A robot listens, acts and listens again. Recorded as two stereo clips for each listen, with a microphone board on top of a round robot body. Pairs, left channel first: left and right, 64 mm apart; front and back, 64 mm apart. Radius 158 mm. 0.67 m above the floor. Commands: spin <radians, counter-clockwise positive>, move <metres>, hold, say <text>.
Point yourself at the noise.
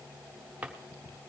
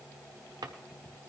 spin -2.79
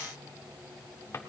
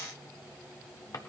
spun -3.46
spin 0.61
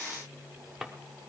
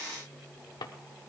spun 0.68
say Found it: a drawer, straight ahead.